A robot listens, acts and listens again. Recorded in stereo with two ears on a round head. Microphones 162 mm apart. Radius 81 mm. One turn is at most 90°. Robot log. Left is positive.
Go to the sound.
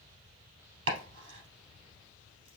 cmd yaw -90
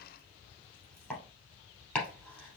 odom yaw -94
cmd fwd 1.0
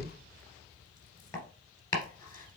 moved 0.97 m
note: The chopping is now 20° left.
cmd yaw +20
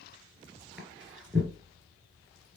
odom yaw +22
cmd fwd 1.0
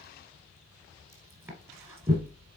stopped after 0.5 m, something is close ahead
note: The chopping is now 15° right.
cmd yaw -15
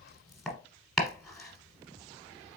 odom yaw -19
end: Arrived at the chopping, straight ahead.